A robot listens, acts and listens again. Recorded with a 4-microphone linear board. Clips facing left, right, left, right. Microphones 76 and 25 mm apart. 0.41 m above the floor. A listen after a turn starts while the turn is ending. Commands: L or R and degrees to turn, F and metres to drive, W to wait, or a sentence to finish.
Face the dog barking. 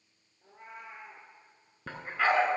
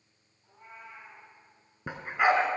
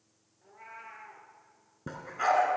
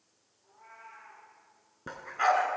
R15
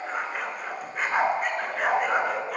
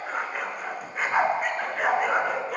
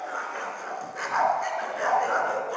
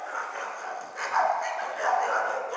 Facing the dog barking.